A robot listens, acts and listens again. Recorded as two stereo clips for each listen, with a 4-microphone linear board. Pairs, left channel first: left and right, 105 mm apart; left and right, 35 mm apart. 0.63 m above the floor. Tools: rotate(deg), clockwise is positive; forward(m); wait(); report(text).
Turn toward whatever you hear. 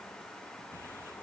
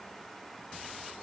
wait()
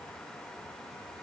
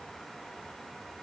wait()
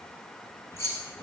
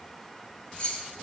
rotate(-25)
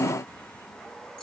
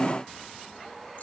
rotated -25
wait()
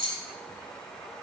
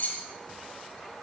rotate(-125)
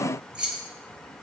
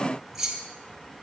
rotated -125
rotate(10)
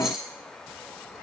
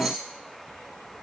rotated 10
report("Found it: keys jangling, straight ahead, 2 to 4 m away.")